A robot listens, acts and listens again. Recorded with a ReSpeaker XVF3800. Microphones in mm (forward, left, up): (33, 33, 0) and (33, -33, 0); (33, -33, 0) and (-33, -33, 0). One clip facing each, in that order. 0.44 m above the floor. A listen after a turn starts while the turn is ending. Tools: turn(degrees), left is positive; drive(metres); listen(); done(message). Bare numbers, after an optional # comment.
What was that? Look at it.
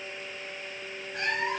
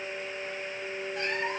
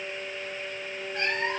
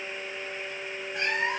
# The cat meowing: 100° left.
turn(100)
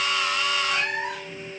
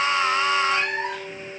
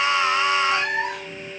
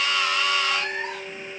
done("Facing the cat meowing.")